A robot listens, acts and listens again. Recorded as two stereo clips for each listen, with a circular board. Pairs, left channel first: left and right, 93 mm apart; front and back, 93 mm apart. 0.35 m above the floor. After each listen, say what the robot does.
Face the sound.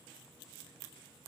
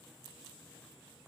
Keep listening.
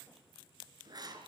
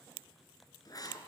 Turn 45° right.
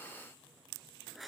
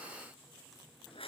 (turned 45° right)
Found it: writing, straight ahead, over 4 m away.